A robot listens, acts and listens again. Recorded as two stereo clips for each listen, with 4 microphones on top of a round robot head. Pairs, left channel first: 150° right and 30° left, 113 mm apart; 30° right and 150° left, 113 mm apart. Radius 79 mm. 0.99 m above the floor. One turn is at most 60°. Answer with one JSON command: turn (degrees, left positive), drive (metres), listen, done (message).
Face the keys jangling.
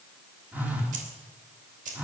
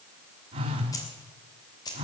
{"turn": 25}
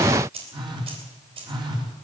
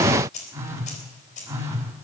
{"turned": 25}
{"turn": -10}
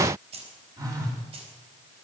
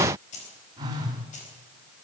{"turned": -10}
{"turn": -10}
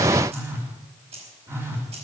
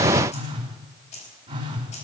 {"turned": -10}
{"done": "Found it: keys jangling, straight ahead, over 4 m away."}